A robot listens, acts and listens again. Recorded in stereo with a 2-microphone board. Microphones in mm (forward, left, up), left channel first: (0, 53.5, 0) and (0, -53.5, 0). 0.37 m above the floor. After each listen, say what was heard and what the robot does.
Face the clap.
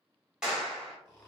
Turn 30° right.
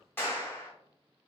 So it is at 25° left. Turn 25° left.
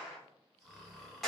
Found it: a clap, straight ahead, 1 to 2 m away.